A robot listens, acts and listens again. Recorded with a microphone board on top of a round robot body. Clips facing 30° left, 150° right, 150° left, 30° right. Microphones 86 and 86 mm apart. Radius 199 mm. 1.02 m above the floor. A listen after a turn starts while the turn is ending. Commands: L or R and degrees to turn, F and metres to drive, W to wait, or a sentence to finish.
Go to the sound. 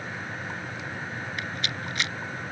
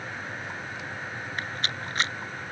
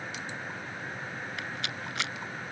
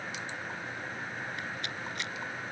L155
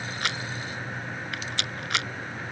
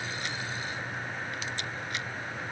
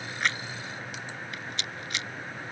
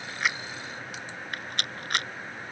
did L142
L10
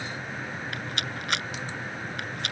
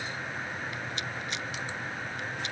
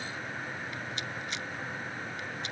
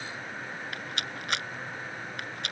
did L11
F1.0
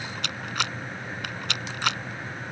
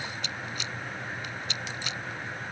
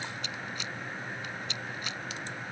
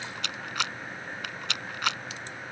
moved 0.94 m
F1.0
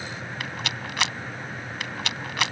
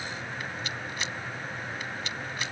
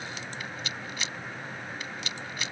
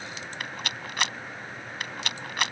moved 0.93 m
F1.0
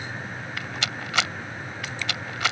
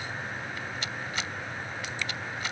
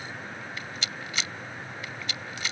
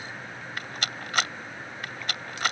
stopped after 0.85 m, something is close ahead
L10
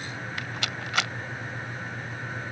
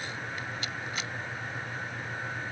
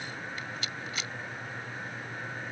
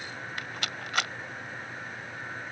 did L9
I am next to the rattle.